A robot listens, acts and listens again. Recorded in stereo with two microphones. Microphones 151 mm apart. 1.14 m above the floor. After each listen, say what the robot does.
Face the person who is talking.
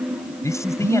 Turn 20° left.
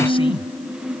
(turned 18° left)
Keep listening.
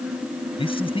Turn 145° left.
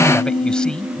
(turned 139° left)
Found it: a man speaking, straight ahead.